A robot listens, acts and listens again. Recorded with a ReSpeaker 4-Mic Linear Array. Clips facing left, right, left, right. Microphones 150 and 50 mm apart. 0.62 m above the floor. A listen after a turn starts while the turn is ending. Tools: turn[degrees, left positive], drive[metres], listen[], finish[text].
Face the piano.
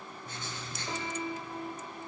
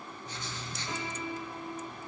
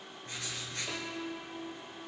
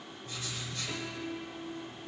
Thought: The piano: about 30° left or 150° left.
Action: turn[30]
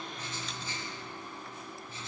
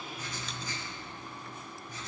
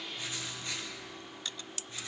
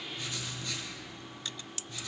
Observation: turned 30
Action: listen[]
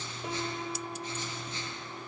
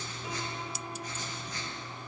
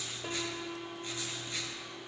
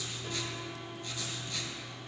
Thought: So it is at 125° left.
Action: turn[125]
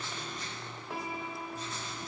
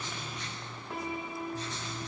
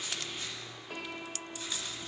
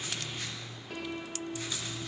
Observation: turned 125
Action: finish[Facing the piano, 1 to 2 m away.]